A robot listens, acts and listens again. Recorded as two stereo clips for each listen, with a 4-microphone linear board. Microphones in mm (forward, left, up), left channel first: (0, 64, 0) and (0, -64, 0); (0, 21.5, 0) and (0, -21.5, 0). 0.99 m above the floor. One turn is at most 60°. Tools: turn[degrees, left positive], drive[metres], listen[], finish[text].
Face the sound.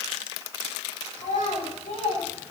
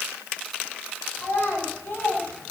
Action: turn[60]
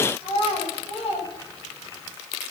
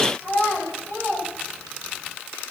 Thought: So it is at 55° left.
Action: turn[55]
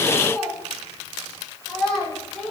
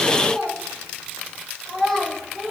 Action: finish[Found it: a child speaking, straight ahead.]